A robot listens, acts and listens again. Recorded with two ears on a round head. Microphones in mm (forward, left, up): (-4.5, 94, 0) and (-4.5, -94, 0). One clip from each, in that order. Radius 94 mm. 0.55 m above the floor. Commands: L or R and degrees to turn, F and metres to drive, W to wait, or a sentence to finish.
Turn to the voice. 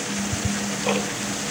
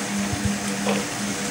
W
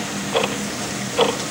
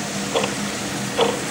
W
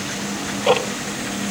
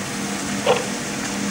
I can't make out anyone speaking, only ticking.